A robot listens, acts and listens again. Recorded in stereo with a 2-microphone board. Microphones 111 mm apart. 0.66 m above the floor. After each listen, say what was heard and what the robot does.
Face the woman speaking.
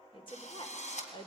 The woman speaking: about 45° left or 135° left. Turn 45° left.
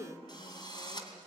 So it is at 80° left. Turn 80° left.
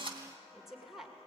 Facing the woman speaking.